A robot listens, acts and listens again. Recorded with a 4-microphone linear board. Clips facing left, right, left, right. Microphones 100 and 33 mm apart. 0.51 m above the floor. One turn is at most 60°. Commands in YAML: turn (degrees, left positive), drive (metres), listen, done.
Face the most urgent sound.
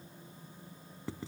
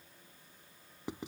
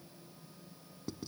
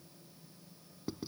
listen: true
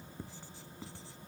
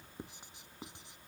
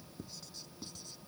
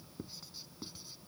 listen: true
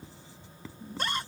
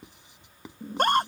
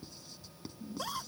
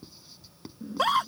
turn: -60
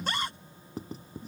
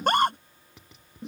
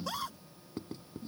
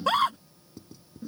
turn: -60
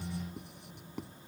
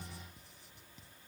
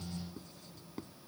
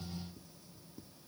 listen: true
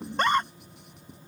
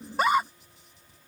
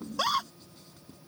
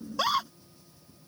done: "Found it: a scream, straight ahead."